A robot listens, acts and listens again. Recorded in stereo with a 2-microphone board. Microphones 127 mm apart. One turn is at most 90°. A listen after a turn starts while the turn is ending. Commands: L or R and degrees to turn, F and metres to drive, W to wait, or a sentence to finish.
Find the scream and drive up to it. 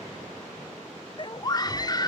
L35
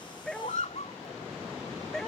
L90
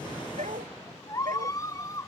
L30
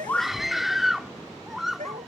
F1.0
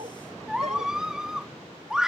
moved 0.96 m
F1.0
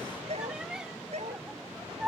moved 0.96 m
F1.0
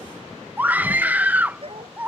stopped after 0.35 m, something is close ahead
R15
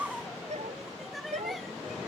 W
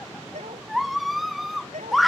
Arrived at the scream, straight ahead.